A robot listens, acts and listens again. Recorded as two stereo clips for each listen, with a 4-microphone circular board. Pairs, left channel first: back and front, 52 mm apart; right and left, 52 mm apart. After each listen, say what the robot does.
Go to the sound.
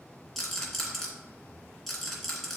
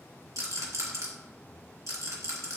Turn 95° left.
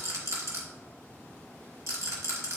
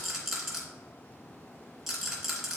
Turn 10° left.
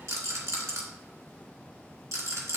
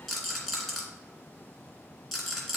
Drive 1.0 m forward.
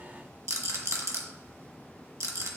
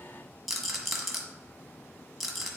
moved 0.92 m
Drive 1.0 m forward.
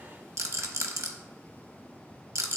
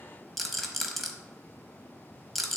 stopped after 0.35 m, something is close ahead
I am next to the rattle.